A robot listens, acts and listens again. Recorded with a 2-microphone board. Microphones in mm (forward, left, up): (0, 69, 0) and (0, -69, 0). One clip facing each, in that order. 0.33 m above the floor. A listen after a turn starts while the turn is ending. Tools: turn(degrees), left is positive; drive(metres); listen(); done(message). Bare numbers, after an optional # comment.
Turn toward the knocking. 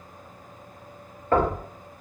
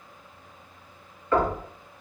# The knocking: about 55° left or 125° left.
turn(55)
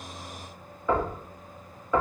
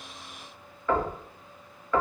# So it is at 20° left.
turn(20)
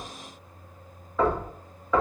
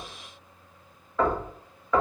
done("Facing the knocking.")